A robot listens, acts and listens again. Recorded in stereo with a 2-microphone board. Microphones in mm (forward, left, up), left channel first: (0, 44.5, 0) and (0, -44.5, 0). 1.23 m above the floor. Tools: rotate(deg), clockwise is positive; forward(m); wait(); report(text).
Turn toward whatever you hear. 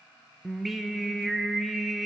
rotate(-30)
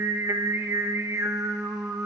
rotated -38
rotate(35)
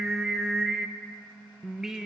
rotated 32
report("Found it: singing, straight ahead, under 1 m away.")